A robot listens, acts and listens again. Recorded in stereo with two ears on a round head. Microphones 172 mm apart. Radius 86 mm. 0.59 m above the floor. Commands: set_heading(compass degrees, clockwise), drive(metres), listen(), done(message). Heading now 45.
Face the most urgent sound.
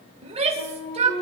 set_heading(80)
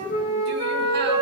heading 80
listen()
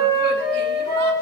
listen()
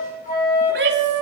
set_heading(190)
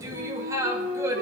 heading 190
set_heading(205)
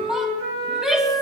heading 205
done("Found it: a shout, straight ahead.")